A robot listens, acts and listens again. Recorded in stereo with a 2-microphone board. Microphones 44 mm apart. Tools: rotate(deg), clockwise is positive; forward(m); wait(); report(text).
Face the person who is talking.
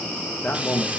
rotate(-40)
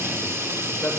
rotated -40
wait()
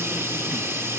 wait()
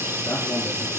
report("I heard a man speaking, but can't make it out now. It was about straight ahead or 100° left.")